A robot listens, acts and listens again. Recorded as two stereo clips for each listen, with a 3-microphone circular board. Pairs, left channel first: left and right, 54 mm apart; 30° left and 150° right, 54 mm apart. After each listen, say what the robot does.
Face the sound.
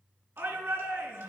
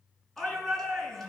Turn 50° right.
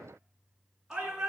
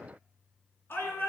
Turn 10° right.
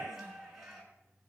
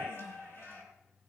Facing the shout.